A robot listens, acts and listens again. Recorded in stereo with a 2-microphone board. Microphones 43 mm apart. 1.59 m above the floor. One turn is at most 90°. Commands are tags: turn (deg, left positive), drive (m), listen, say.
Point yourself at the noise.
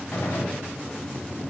<turn deg="50"/>
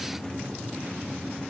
<listen/>
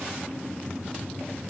<say>I heard a gunshot, but can't make it out now. It was about straight ahead or 80° left.</say>